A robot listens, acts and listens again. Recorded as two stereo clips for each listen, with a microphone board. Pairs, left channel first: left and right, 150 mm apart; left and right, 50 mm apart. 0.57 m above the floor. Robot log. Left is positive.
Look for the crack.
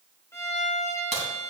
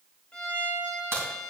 note: The crack: about 50° right or 130° right.
cmd yaw -50
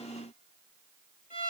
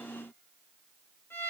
cmd idle
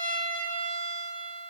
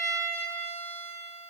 end: I heard a crack, but can't make it out now. It was about straight ahead or 80° right.